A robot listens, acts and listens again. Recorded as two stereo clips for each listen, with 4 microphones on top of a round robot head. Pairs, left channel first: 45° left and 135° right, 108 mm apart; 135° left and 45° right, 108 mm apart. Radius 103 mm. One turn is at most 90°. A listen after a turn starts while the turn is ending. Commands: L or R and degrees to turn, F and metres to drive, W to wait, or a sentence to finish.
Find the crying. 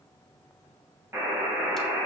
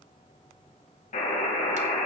W
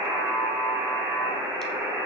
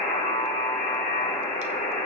W
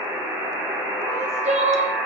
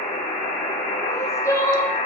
R90
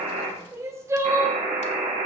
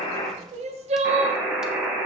R75
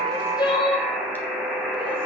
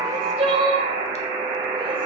Found it: crying, straight ahead.